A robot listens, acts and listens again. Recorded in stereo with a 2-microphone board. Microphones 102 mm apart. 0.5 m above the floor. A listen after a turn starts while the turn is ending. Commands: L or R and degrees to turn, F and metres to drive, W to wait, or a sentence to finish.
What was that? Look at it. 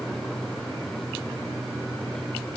W
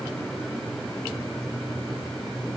W
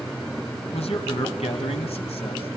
L90
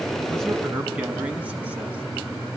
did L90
R10
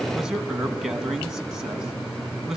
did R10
Found it: a man speaking, straight ahead.